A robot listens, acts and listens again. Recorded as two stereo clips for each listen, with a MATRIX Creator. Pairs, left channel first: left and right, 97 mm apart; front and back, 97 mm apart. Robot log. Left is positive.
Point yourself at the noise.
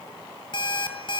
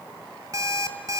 note: The alarm clock: 125° left.
cmd yaw +125
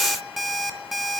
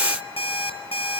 end: Facing the alarm clock.